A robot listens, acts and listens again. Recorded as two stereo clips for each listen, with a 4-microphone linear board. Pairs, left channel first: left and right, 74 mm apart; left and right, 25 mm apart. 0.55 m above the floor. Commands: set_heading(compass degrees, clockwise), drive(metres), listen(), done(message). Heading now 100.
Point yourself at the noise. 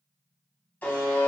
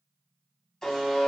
set_heading(75)
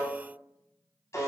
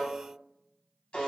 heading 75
set_heading(305)
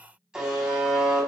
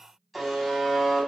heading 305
set_heading(315)
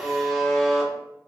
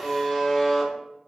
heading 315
done("Found it: a buzzer, straight ahead, under 1 m away.")